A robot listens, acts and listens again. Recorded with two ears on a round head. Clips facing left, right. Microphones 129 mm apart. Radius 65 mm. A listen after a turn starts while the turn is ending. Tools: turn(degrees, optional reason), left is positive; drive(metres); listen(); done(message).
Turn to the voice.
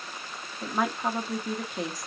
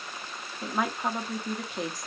turn(degrees=30)
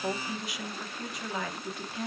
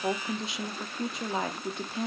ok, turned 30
turn(degrees=-30, reason="So it is at 30° right.")
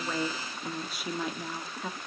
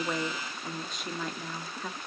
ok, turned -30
done("Facing the woman speaking.")